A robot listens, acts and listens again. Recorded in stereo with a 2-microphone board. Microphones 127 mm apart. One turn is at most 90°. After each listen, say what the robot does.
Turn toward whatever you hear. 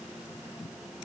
Keep listening.
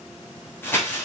Turn 15° left.
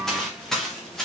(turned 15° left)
Found it: crumpling, straight ahead, 2 to 4 m away.